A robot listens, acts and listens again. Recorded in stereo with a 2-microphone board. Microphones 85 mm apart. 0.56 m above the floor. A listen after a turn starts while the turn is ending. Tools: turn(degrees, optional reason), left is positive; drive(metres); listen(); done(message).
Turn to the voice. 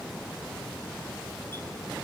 listen()
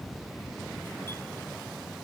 listen()
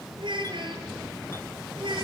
turn(degrees=-65, reason="The child speaking: about 65° right or 115° right.")
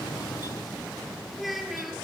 done("Found it: a child speaking, straight ahead, over 4 m away.")